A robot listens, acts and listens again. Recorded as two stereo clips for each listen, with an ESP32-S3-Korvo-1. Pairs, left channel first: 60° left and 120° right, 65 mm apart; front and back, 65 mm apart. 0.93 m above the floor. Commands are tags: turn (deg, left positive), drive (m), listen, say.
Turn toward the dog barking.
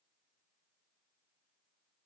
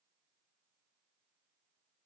<listen/>
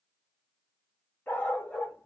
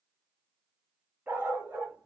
<turn deg="125"/>
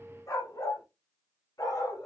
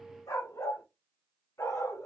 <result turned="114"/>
<turn deg="35"/>
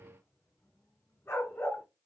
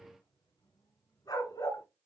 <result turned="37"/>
<say>Facing the dog barking.</say>